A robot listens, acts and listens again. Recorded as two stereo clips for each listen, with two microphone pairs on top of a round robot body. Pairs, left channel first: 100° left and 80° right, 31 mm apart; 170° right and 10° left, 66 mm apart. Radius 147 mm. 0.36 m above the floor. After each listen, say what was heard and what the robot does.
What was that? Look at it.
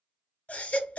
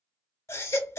The baby crying: 145° left. Turn 145° left.
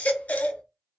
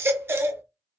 The baby crying is now 60° left. Turn 60° left.
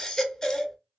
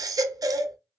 The baby crying is now 25° left. Turn 25° left.
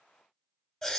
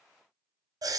The baby crying is now 25° left. Turn 25° left.
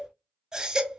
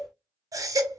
The baby crying is now 15° right. Turn 15° right.
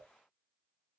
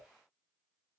Keep listening.
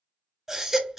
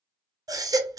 Found it: a baby crying, straight ahead, under 1 m away.